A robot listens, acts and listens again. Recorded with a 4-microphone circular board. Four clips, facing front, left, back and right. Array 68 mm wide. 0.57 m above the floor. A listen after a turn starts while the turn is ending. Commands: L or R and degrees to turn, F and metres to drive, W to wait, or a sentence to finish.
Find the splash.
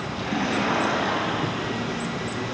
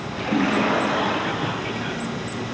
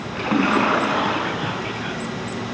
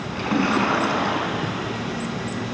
R160
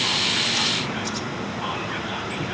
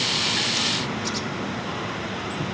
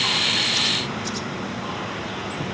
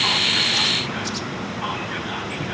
Facing where the splash came from. I can't hear it now.